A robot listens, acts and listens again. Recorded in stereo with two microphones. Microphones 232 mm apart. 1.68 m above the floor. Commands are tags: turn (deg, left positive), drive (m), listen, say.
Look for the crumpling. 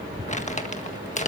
<turn deg="30"/>
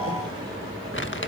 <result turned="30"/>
<turn deg="115"/>
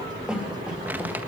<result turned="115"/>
<turn deg="-10"/>
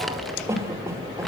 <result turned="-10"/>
<listen/>
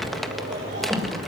<say>Facing the crumpling.</say>